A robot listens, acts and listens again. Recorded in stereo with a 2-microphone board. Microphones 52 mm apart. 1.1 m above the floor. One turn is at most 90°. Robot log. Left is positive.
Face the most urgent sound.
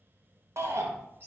note: The shout: about 60° right or 120° right.
cmd yaw -60
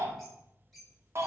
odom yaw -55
note: So it is at 65° right.
cmd yaw -65
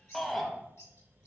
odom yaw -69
end: Facing the shout, under 1 m away.